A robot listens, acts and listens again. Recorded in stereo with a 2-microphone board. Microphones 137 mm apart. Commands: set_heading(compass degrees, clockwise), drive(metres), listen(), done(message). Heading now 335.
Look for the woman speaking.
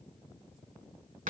listen()
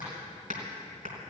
listen()
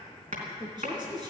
set_heading(10)
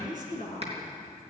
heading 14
set_heading(119)
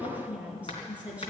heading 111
set_heading(121)
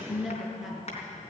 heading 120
done("Found it: a woman speaking, straight ahead, over 4 m away.")